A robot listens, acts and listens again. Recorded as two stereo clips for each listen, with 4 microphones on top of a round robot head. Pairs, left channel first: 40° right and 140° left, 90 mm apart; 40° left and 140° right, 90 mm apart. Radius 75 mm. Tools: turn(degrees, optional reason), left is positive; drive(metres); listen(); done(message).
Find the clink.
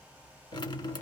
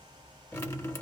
listen()
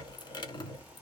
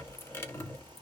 listen()
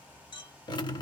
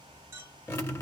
turn(degrees=-80, reason="The clink: 80° right.")
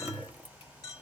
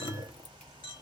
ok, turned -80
turn(degrees=10, reason="The clink is now 10° left.")
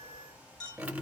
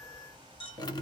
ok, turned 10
done("Found it: a clink, straight ahead, 2 to 4 m away.")